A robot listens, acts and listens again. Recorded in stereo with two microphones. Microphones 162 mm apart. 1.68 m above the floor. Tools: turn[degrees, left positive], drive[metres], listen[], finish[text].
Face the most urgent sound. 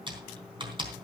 Action: listen[]
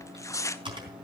Action: listen[]
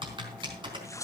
Action: finish[I can't make out anything urgent, only typing on a keyboard and tearing paper.]